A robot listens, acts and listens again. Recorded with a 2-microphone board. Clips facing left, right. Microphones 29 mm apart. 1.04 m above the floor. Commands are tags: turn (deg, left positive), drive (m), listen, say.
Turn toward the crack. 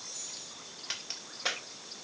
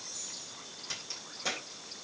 <turn deg="40"/>
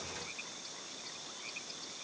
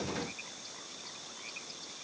<listen/>
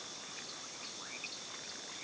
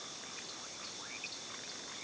<say>I heard a crack, but can't make it out now. It was about straight ahead or 100° left.</say>